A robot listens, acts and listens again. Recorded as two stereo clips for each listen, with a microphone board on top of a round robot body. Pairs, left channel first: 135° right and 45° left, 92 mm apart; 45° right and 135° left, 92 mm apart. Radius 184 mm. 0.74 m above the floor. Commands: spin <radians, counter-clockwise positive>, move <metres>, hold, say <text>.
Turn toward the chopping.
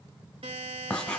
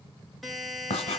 hold
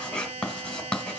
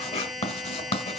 hold
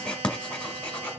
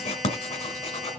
say I can't make out chopping to turn to.